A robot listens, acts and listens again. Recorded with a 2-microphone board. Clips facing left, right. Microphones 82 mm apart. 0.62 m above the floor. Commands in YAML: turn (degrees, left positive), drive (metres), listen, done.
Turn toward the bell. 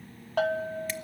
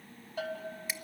turn: 70
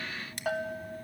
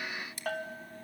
turn: 10
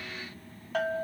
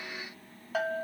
done: "Facing the bell."